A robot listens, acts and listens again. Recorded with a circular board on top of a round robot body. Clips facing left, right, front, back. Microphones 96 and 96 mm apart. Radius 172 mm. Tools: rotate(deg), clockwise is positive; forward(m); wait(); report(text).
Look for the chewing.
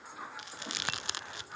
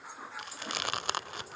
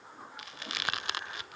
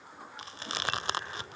rotate(125)
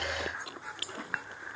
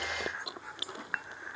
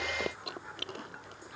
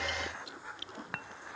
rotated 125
rotate(20)
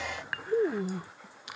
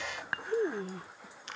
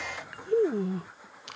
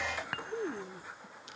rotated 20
rotate(-10)
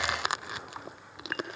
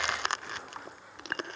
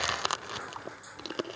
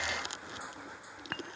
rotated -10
report("Facing the chewing.")